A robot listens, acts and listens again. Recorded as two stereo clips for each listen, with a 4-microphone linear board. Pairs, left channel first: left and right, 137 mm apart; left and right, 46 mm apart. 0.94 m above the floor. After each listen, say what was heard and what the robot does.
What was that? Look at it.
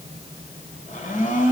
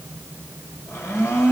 The blender: about 70° left or 110° left. Turn 70° left.
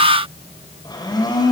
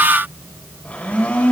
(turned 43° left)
So it is at 30° left. Turn 30° left.
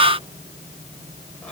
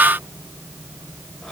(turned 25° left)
Keep listening.
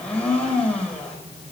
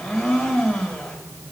Facing the blender, over 4 m away.